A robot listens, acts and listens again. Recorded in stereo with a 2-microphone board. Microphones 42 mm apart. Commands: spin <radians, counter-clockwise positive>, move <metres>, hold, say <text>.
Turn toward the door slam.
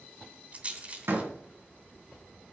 spin -1.57
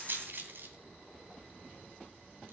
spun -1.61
say Facing where the door slam came from. I can't hear it now.